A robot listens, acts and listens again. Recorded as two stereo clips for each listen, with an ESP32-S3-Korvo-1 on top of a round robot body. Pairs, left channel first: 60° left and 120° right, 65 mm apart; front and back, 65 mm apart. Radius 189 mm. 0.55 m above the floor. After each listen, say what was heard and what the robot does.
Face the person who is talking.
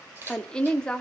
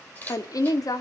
The woman speaking: 15° right. Turn 15° right.
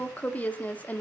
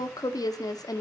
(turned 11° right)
Found it: a woman speaking, straight ahead.